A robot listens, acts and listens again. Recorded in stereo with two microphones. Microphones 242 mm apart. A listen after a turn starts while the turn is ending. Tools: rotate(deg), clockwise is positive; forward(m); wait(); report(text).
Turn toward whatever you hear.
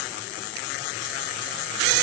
wait()
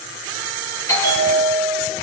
rotate(-30)
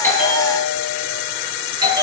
rotate(20)
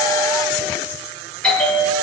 report("Facing the bell, over 4 m away.")